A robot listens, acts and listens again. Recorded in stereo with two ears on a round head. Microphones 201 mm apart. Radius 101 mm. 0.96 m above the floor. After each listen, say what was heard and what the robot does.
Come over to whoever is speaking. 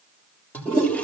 Keep listening.
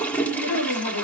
Turn 90° left.
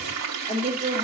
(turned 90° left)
So it is at 15° right. Turn 15° right.
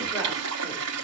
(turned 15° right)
Keep listening.
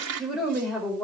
Drive 1.0 m forward.
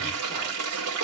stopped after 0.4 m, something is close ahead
Keep listening.
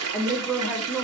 Blocked. The woman speaking is further on, straight ahead.